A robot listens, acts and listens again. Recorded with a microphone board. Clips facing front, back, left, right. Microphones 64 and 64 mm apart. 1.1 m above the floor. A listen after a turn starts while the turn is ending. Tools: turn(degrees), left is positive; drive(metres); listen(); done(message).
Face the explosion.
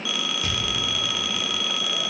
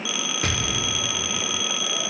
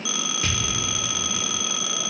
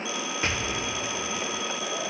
turn(degrees=-150)
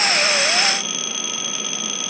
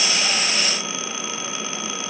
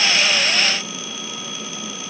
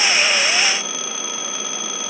done("I heard an explosion from this way, but can't make it out now.")